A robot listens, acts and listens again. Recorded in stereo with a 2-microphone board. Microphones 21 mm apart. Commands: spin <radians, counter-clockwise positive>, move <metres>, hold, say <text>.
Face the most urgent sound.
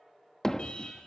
spin 0.87
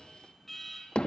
say Found it: an alarm, straight ahead.